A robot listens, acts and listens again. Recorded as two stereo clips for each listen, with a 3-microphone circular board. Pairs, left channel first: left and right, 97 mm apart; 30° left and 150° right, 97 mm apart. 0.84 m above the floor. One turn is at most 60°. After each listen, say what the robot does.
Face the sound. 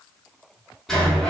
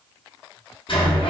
Facing the sliding door, under 1 m away.